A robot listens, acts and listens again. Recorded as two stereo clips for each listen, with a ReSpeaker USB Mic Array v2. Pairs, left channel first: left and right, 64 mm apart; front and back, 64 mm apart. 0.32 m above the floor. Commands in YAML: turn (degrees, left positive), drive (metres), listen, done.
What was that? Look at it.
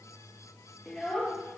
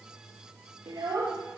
turn: 170
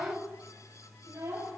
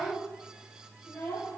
turn: -55
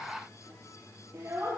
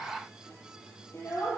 turn: -50
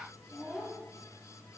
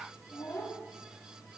done: "Found it: a child speaking, straight ahead."